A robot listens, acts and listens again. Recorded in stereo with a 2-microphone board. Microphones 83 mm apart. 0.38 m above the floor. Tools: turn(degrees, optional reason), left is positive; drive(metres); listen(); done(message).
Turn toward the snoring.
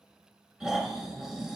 turn(degrees=-30)
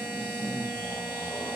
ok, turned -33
turn(degrees=30, reason="So it is at 30° left.")
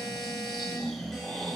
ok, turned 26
done("Facing the snoring.")